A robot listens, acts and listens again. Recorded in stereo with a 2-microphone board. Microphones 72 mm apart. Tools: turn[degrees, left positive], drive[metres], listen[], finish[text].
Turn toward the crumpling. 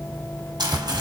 Action: turn[-90]
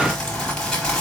Thought: So it is at 10° left.
Action: turn[10]
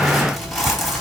Action: finish[Found it: crumpling, straight ahead.]